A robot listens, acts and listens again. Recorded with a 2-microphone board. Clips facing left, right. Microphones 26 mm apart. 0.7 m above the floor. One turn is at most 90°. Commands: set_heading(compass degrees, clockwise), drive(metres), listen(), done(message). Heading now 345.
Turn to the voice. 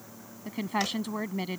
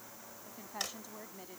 set_heading(255)
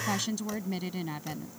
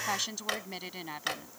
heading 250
set_heading(260)
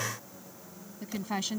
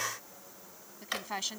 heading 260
done("Found it: a woman speaking, straight ahead.")